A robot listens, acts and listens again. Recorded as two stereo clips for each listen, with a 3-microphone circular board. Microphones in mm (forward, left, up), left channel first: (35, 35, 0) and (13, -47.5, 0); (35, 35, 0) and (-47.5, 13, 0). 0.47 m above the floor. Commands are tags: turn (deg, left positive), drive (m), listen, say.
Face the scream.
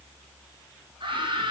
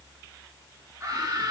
<turn deg="-115"/>
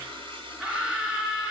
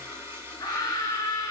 <turn deg="-25"/>
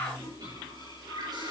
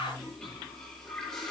<turn deg="10"/>
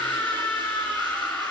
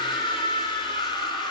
<say>Facing the scream, over 4 m away.</say>